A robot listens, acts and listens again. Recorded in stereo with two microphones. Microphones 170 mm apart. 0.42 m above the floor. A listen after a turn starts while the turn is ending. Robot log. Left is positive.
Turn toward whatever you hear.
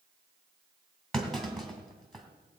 cmd yaw +30
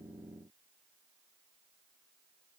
cmd idle
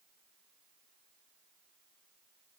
end: I heard a clunk, but can't make it out now. It was about 25° right or 145° left.